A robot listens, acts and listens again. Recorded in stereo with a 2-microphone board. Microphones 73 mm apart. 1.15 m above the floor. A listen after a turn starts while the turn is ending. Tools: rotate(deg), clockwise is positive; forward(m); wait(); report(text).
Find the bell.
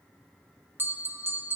rotate(30)
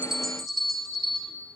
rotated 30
report("Found it: a bell, straight ahead.")